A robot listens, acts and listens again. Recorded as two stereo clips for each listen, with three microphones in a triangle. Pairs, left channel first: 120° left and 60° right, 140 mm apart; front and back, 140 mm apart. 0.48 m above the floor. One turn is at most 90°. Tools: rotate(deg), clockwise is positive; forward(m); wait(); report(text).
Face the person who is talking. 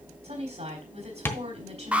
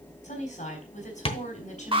rotate(25)
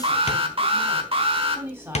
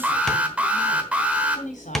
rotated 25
rotate(-15)
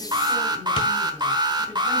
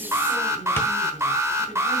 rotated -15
wait()
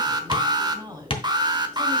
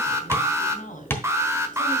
report("Facing the woman speaking, 2 to 4 m away.")